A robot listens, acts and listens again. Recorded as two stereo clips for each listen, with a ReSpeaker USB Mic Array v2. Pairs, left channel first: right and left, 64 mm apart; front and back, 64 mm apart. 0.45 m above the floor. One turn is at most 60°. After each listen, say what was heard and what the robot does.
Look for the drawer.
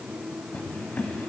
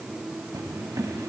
The drawer: 155° right. Turn 60° right.
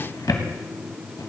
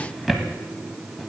The drawer is now 90° right. Turn 60° right.
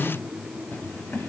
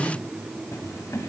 The drawer is now 35° right. Turn 35° right.
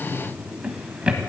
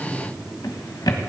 The drawer is now 15° left. Turn 15° left.
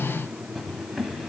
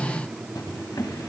Found it: a drawer, straight ahead.